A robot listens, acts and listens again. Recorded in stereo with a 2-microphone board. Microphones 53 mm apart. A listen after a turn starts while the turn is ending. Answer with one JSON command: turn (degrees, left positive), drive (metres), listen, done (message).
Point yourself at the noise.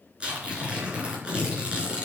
{"turn": -20}
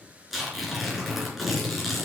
{"done": "Facing the tearing paper."}